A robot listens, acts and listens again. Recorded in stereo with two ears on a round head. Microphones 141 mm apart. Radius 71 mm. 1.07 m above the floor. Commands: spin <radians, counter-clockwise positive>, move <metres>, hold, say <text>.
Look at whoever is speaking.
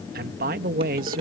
spin -0.96
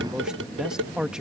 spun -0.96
say Facing the man speaking.